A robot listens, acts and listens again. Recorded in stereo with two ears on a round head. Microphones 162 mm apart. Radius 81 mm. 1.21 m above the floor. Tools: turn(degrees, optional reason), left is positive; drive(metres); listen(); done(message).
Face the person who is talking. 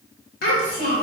turn(degrees=60, reason="The child speaking: about 60° left or 120° left.")
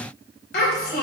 turn(degrees=60, reason="So it is at 60° left.")
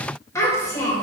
turn(degrees=20, reason="The child speaking is now 20° left.")
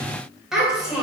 done("Found it: a child speaking, straight ahead.")